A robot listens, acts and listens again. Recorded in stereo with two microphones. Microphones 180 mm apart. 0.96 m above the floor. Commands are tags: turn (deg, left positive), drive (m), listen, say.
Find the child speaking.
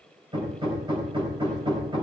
<listen/>
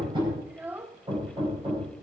<turn deg="-30"/>
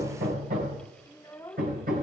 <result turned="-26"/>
<turn deg="20"/>
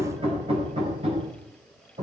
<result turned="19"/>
<listen/>
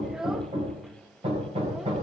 <say>Facing the child speaking.</say>